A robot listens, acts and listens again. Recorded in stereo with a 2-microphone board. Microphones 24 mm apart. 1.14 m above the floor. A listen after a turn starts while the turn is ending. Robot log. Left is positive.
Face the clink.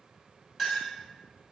cmd yaw -30
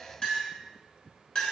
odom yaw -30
note: So it is at 25° left.
cmd yaw +25
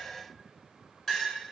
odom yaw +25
end: Facing the clink.